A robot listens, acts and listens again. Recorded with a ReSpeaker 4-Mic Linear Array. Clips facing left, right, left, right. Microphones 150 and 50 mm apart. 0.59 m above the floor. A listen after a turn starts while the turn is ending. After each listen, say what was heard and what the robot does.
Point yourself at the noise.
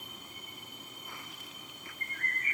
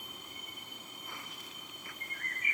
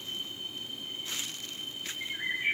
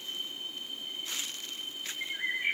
Turn 30° right.
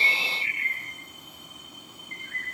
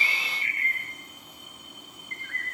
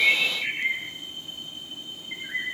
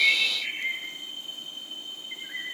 So it is at 20° left. Turn 20° left.
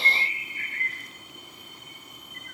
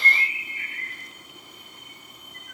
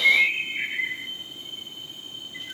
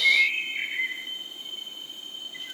Facing the bird, 2 to 4 m away.